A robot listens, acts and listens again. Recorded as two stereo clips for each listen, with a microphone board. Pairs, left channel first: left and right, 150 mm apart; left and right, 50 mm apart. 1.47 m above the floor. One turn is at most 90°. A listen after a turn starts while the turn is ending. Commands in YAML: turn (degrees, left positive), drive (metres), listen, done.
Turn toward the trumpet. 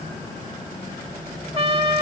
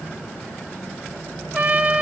turn: -40
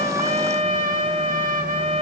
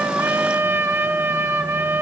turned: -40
turn: -90
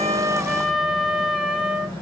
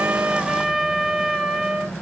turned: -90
done: "Found it: a trumpet, straight ahead."